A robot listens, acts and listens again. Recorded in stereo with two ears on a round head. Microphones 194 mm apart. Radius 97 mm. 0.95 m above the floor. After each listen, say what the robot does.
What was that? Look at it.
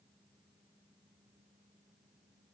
Keep listening.
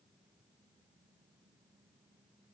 Keep listening.
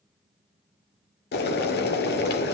Turn 50° left.
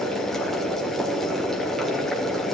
Found it: boiling, straight ahead.